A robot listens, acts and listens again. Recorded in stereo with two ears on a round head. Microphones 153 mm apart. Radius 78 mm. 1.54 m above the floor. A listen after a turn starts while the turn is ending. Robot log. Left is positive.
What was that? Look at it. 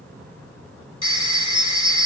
note: The phone ringing: about 30° left or 150° left.
cmd yaw +30
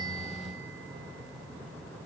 cmd idle
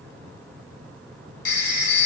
note: So it is at 120° left.
cmd yaw +120
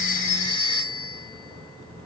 note: The phone ringing is now 30° left.
cmd yaw +30
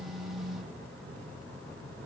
cmd idle
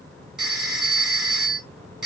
end: Found it: a phone ringing, straight ahead, 2 to 4 m away.